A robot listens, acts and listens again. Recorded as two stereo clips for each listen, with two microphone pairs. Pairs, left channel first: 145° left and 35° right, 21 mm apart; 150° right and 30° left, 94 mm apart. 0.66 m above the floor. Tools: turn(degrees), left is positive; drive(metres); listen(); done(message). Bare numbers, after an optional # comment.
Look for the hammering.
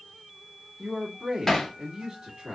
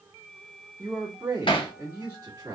# The hammering: 140° right.
turn(-140)
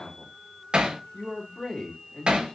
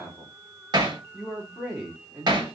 # The hammering is now 10° right.
turn(-10)
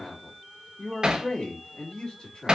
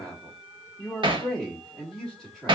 done("Facing the hammering.")